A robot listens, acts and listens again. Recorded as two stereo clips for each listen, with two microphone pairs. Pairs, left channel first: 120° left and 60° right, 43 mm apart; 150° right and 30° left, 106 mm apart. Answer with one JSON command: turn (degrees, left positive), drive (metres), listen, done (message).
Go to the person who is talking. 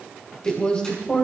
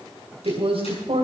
{"turn": 50}
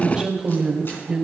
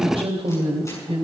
{"turn": 10}
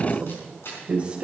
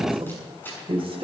{"drive": 1.0}
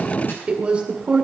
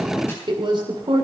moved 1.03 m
{"drive": 1.0}
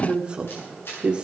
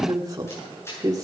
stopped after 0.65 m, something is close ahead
{"done": "Arrived at the woman speaking, straight ahead."}